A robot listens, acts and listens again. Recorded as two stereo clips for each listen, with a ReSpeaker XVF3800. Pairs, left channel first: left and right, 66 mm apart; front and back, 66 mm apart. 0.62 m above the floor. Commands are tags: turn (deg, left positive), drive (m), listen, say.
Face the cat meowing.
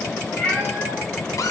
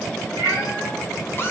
<turn deg="15"/>
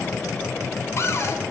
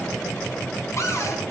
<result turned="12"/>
<listen/>
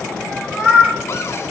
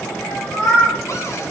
<turn deg="-15"/>
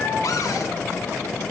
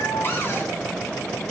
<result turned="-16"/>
<listen/>
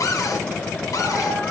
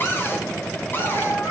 <say>Facing the cat meowing.</say>